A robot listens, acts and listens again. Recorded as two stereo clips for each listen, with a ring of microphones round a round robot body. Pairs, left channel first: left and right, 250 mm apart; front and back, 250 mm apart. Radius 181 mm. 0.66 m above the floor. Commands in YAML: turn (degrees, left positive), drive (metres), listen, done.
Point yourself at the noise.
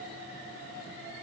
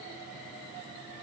listen: true
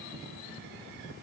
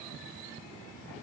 listen: true
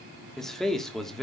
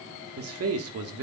turn: 180
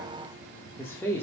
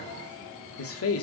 turn: 10
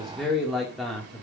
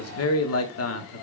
done: "Found it: a man speaking, straight ahead, 1 to 2 m away."